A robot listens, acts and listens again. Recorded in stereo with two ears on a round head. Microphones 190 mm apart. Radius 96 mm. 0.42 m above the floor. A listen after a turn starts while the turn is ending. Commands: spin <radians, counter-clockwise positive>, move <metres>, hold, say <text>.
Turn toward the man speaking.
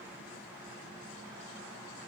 hold
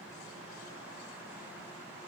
hold
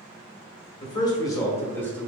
spin 0.52
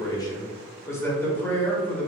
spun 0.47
spin 0.52
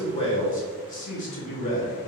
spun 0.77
spin 2.53
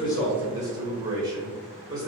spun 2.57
spin -0.26
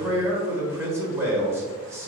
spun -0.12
spin -0.17
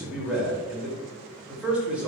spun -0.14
say Found it: a man speaking, straight ahead, 1 to 2 m away.